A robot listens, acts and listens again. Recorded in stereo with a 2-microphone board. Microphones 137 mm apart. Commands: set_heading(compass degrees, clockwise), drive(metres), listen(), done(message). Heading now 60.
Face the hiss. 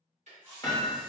set_heading(90)
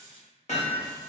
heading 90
set_heading(225)
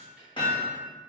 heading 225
listen()
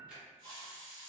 set_heading(280)
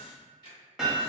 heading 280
listen()
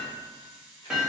set_heading(290)
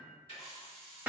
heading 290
done("Found it: a hiss, straight ahead.")